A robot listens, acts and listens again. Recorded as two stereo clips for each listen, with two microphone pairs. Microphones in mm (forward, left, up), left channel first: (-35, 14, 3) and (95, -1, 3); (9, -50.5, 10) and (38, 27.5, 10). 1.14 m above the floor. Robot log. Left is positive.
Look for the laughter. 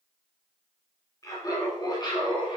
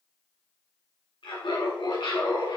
note: The laughter: 135° right.
cmd yaw -135
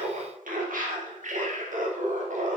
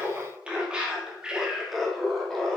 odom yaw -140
note: The laughter is now 30° right.
cmd yaw -30
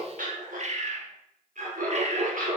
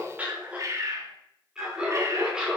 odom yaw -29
note: The laughter is now 10° right.
cmd yaw -10
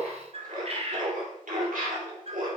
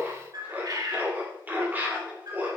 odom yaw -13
end: Facing the laughter, 2 to 4 m away.